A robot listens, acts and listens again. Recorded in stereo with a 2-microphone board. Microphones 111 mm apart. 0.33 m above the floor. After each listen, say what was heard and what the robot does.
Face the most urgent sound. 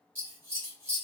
Keep listening.
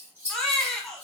Turn 30° left.
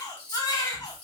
So it is at 145° left. Turn 145° left.
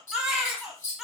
Found it: a baby crying, straight ahead, under 1 m away.